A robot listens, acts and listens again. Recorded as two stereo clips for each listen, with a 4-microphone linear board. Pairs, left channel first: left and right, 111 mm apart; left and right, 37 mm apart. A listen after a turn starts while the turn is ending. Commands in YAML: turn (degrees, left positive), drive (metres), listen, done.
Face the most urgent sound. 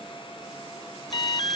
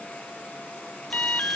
turn: 45
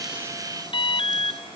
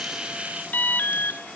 turn: 80
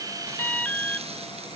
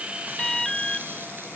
turn: 15
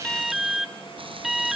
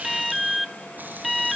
done: "Found it: an alarm, straight ahead."